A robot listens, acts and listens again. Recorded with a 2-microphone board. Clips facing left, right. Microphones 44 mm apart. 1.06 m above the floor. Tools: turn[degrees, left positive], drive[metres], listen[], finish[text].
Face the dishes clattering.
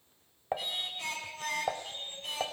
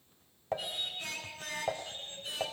Thought: The dishes clattering: about 20° left or 160° left.
Action: turn[20]
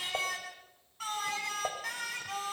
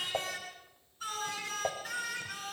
Action: finish[Facing the dishes clattering, 1 to 2 m away.]